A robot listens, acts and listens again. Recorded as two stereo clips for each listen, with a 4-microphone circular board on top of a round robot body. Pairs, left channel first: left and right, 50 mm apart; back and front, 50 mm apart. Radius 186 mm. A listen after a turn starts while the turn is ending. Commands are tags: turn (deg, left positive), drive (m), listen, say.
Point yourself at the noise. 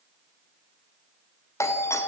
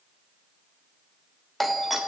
<turn deg="90"/>
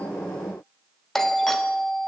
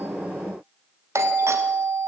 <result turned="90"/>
<turn deg="10"/>
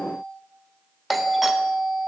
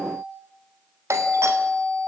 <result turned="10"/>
<say>Found it: a doorbell, straight ahead, 2 to 4 m away.</say>